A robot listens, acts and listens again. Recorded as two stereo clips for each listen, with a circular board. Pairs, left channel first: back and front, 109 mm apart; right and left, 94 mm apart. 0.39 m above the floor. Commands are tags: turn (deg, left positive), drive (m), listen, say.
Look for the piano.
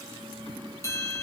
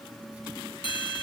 <listen/>
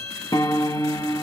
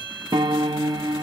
<turn deg="130"/>
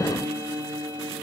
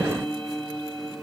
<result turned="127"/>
<say>Facing the piano, under 1 m away.</say>